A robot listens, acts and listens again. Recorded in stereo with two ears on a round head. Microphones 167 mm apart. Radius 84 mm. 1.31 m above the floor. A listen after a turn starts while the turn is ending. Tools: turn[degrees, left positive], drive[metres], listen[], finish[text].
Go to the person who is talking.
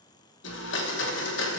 Action: listen[]
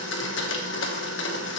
Action: listen[]
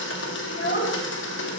Thought: The child speaking: about 50° left or 130° left.
Action: turn[50]
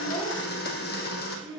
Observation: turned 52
Action: drive[1.0]
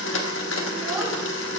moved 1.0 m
Action: listen[]
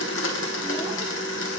Action: listen[]
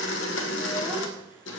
Action: finish[I heard a child speaking from this way, but can't make it out now. I did not reach it.]